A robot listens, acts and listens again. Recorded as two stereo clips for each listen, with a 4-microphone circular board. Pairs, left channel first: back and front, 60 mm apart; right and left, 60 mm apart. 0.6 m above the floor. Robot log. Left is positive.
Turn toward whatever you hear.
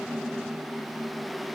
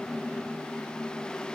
cmd idle
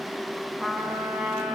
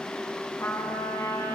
note: The trumpet: 75° right.
cmd yaw -75
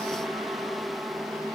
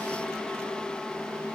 cmd idle
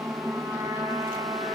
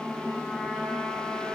end: Facing the trumpet.